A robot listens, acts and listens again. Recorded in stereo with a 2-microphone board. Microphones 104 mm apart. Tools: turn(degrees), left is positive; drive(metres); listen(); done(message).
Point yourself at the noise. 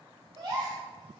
turn(degrees=-45)
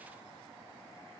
listen()
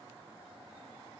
done("I heard a gasp, but can't make it out now. It was about straight ahead or 90° right.")